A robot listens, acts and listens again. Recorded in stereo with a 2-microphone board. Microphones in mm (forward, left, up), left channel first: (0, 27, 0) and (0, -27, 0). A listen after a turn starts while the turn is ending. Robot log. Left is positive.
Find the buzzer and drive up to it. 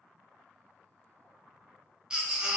cmd idle
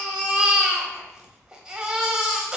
cmd idle
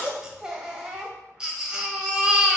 end: I can't make out a buzzer, only a baby crying.